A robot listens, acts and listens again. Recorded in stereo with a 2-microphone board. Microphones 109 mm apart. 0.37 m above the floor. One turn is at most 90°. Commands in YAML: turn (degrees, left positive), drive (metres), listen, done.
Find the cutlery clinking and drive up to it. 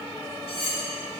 turn: 65
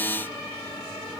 listen: true
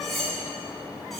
drive: 1.0
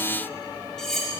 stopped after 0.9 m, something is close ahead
done: "I am next to the cutlery clinking."